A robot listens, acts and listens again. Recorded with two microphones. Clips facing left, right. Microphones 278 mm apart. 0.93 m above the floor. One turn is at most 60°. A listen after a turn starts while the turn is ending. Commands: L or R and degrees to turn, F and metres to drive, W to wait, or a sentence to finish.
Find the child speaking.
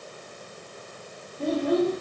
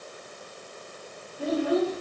R30
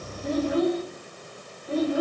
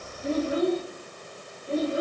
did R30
R60
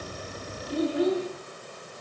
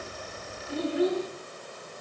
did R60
R60
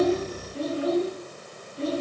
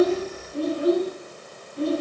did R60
R60
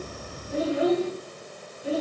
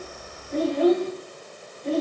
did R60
Found it: a child speaking, straight ahead.